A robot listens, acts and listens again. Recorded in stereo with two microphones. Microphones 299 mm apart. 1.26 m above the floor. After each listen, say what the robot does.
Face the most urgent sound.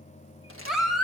Turn 30° left.
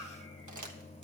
Keep listening.
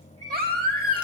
Turn 30° right.
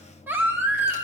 Facing the baby crying, 1 to 2 m away.